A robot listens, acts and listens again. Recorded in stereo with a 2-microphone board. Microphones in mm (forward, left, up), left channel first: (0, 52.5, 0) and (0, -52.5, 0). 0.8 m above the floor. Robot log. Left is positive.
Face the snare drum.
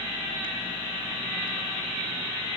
cmd idle
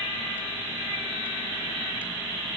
cmd idle
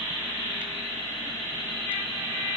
end: I can't make out a snare drum to turn to.